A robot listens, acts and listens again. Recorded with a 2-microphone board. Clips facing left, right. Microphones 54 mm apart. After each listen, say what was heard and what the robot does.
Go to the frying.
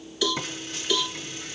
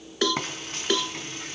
The frying: about 45° right or 135° right. Turn 45° right.
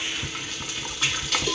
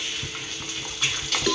Drive 1.0 m forward.
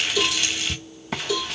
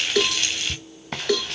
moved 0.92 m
Drive 1.0 m forward.
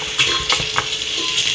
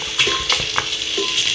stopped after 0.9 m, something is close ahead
Arrived at the frying, straight ahead.